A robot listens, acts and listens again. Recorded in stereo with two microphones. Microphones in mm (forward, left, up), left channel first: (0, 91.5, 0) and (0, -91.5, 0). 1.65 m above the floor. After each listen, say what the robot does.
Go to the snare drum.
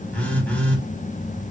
Keep listening.
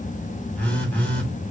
Keep listening.
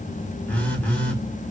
I can't make out a snare drum to turn to.